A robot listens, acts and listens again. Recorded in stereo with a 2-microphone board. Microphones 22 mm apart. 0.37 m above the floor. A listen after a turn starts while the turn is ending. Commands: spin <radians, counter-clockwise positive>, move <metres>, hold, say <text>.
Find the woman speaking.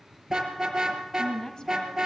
spin 0.52
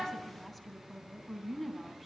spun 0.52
say Found it: a woman speaking, straight ahead.